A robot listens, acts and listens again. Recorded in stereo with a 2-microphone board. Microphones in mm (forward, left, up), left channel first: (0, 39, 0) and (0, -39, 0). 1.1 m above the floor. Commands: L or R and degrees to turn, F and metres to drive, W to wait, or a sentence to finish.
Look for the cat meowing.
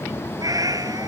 R50
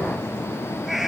Facing the cat meowing.